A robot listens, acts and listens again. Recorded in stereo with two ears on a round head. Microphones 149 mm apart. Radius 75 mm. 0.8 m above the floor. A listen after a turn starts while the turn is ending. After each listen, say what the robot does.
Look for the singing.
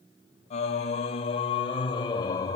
Turn 25° left.
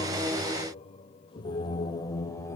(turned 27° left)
Turn 20° left.
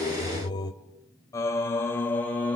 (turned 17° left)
Turn 30° left.
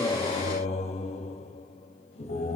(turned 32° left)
Turn 140° left.
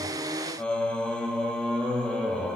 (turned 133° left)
Facing the singing.